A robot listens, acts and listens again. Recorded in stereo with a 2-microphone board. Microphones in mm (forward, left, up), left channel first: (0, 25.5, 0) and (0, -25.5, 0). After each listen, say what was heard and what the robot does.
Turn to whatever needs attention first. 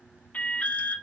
The alarm: about 30° left or 150° left. Turn 30° left.
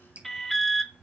Facing the alarm.